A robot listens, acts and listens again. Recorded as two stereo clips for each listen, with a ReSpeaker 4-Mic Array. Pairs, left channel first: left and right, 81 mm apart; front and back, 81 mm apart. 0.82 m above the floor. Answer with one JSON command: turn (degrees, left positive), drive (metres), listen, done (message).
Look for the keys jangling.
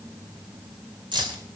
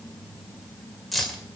{"turn": -85}
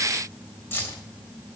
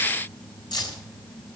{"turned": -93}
{"turn": 30}
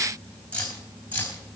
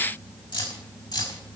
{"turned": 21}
{"turn": 20}
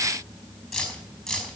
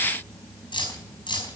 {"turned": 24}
{"done": "Found it: keys jangling, straight ahead, over 4 m away."}